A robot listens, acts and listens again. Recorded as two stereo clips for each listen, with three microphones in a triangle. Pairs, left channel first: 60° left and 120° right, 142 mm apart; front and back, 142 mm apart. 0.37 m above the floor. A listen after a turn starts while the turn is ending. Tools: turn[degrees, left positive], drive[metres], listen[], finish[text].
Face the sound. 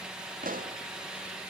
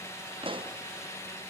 Thought: The pop: 130° right.
Action: turn[-130]
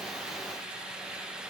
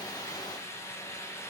Action: finish[I heard a pop from this way, but can't make it out now.]